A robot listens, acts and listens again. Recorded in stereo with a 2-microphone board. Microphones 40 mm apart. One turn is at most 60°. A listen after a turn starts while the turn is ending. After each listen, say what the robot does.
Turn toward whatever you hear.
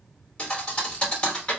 Turn 25° left.
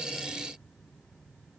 Keep listening.
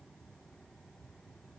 I heard a thud, but can't make it out now. It was about straight ahead or 130° left.